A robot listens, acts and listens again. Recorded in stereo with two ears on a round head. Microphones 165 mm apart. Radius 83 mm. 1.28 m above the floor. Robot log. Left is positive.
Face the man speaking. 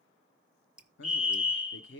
note: The man speaking: about 65° left or 115° left.
cmd yaw +65
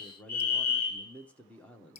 end: Found it: a man speaking, straight ahead.